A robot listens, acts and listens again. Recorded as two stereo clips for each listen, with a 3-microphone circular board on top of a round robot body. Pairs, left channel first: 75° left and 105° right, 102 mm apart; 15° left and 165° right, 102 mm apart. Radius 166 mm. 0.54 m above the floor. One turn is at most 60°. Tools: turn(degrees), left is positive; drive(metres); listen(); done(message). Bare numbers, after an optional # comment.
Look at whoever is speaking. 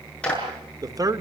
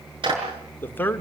# The man speaking: 55° right.
turn(-55)
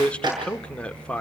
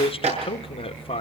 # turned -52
done("Found it: a man speaking, straight ahead.")